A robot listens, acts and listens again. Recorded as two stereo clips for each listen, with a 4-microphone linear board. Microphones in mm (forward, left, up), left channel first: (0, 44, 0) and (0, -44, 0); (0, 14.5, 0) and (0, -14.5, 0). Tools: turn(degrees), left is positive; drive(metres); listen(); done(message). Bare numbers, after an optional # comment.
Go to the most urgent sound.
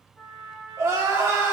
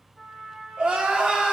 # The crying: about 35° right or 145° right.
turn(-35)
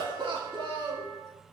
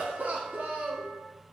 # So it is at 110° right.
turn(-110)
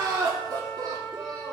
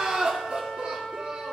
# The crying is now 45° right.
turn(-45)
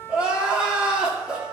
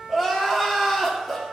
# The crying is now 10° right.
turn(-10)
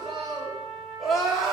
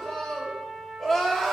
drive(1.0)
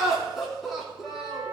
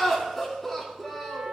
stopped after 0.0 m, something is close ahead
done("Something is in my way. I am facing the crying but have not reached it.")